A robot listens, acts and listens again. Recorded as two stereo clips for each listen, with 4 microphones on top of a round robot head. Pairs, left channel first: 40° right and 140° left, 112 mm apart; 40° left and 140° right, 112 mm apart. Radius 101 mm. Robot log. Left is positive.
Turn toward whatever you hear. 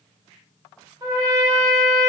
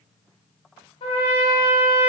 note: The trumpet: 80° left.
cmd yaw +80
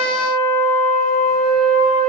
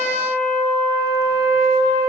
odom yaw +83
end: Found it: a trumpet, straight ahead, under 1 m away.